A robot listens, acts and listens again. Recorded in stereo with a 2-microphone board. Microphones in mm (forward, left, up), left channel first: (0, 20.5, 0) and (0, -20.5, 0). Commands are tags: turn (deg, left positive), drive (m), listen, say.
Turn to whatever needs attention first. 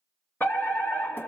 <turn deg="50"/>
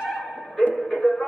<say>Facing the fire alarm.</say>